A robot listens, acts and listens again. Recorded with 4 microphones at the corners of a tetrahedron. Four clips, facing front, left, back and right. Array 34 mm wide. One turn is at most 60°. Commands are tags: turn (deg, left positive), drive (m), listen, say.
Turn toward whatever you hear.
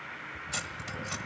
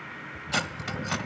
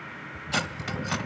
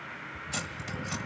<turn deg="60"/>
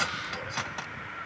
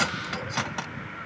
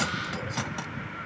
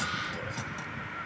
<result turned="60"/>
<turn deg="60"/>
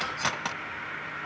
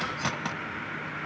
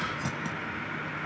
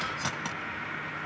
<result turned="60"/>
<turn deg="10"/>
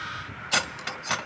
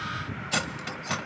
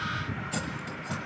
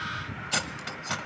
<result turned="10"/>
<say>Found it: cutlery clinking, straight ahead.</say>